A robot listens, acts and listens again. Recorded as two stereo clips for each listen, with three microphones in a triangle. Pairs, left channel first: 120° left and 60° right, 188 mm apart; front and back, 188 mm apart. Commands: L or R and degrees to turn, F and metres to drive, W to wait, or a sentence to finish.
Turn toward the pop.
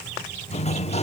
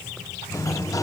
W
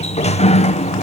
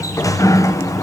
W
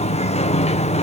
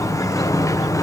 I can't make out a pop to turn to.